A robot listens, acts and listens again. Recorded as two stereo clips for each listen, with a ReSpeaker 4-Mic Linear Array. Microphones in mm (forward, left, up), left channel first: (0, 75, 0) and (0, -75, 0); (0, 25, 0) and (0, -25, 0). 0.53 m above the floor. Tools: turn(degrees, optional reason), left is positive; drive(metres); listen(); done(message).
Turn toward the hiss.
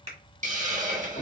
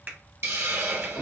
turn(degrees=-55, reason="The hiss: about 55° right or 125° right.")
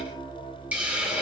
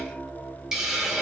turn(degrees=-10, reason="So it is at 10° right.")
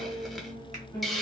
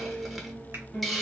done("Found it: a hiss, straight ahead, under 1 m away.")